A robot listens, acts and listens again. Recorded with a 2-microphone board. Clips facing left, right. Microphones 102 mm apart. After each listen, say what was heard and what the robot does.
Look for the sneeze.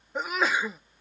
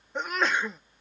Turn 30° left.
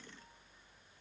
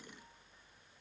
Keep listening.
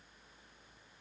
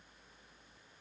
I heard a sneeze, but can't make it out now. It was about 25° right or 145° left.